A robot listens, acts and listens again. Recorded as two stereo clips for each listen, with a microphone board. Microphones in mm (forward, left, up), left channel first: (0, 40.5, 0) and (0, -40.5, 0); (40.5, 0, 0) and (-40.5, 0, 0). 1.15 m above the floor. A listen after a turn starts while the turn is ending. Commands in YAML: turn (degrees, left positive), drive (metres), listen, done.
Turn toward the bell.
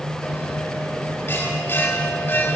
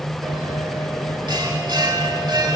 turn: 155
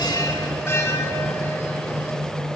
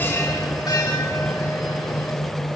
turn: 35
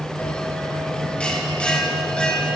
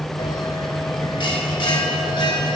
turn: 15
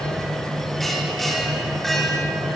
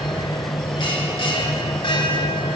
done: "Facing the bell, 2 to 4 m away."